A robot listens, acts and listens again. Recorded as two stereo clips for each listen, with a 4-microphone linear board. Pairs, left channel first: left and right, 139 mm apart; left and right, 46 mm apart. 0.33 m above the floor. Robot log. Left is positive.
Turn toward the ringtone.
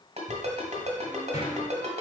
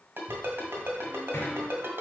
note: The ringtone: about 55° right or 125° right.
cmd yaw -55
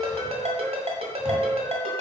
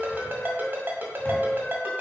note: So it is at 55° right.
cmd yaw -55
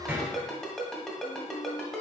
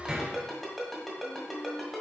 end: Found it: a ringtone, straight ahead, 1 to 2 m away.